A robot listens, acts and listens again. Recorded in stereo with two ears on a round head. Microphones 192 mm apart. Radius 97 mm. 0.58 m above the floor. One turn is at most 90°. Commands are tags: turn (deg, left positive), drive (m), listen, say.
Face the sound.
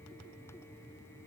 <listen/>
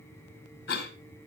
<turn deg="50"/>
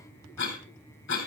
<turn deg="70"/>
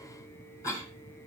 <turn deg="15"/>
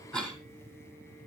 <say>Facing the cough.</say>